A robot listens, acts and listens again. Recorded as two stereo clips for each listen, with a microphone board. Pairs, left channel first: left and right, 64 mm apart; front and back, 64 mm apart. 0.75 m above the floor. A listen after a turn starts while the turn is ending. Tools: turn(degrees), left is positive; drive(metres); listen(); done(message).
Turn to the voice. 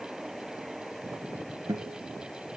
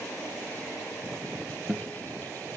listen()
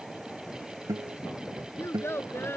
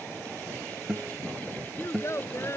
turn(degrees=40)
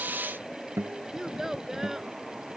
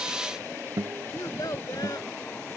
done("Found it: a child speaking, straight ahead.")